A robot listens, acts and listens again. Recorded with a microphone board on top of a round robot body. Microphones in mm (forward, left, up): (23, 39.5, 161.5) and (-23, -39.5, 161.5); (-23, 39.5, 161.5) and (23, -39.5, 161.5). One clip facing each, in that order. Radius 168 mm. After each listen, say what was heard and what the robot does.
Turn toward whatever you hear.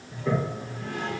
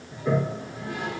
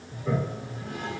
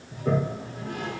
The toilet flushing: 45° right. Turn 45° right.
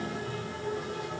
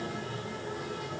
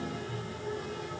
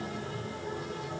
Found it: a toilet flushing, straight ahead.